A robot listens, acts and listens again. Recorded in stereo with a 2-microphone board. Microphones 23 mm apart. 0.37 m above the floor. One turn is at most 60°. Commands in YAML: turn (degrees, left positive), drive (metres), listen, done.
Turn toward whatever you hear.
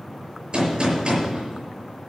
turn: -55
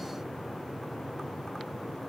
listen: true
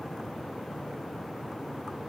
done: "I heard a gunshot, but can't make it out now. It was about straight ahead or 70° right."